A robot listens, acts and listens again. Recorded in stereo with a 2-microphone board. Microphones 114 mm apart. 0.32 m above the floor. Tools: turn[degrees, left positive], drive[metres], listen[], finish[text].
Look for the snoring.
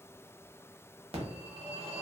Action: listen[]
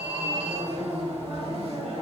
Action: listen[]
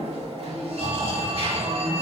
Thought: The snoring: about 50° right or 130° right.
Action: turn[-50]
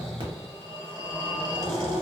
Action: finish[Facing the snoring.]